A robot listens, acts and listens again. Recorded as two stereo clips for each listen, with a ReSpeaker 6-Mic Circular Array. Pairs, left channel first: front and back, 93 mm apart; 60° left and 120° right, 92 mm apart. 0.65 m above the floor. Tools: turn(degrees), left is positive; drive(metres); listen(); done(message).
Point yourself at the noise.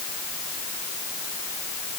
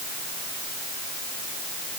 listen()
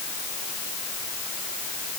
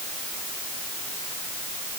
listen()
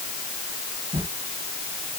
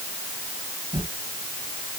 turn(degrees=-155)
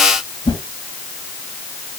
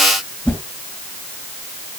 turn(degrees=-15)
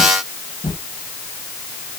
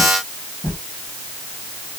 done("Found it: a whoosh, straight ahead.")